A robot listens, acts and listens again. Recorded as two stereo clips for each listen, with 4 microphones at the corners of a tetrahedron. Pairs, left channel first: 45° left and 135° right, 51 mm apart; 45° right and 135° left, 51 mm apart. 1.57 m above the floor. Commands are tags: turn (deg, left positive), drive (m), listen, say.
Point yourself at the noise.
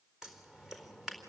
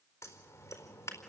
<turn deg="-55"/>
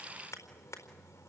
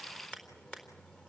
<turn deg="25"/>
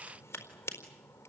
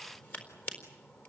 <say>Found it: scissors, straight ahead, over 4 m away.</say>